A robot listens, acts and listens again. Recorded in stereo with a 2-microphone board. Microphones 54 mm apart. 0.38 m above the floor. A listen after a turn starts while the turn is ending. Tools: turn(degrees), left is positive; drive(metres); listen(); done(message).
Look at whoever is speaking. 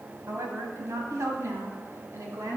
turn(degrees=-70)
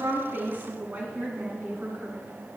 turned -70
turn(degrees=-35)
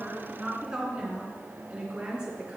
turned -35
turn(degrees=-15)
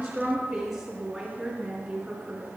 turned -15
done("Found it: a woman speaking, straight ahead, 2 to 4 m away.")